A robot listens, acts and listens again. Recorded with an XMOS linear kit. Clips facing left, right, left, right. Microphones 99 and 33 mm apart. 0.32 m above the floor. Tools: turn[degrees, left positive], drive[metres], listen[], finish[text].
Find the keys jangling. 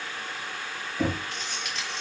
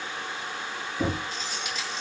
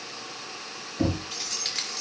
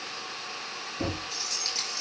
Thought: The keys jangling: about 65° left or 115° left.
Action: turn[65]
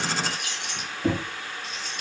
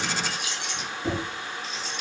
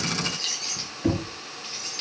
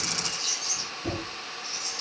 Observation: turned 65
Thought: So it is at 50° left.
Action: turn[50]
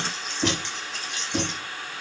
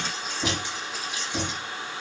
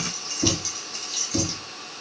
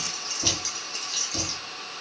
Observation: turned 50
Action: finish[Found it: keys jangling, straight ahead.]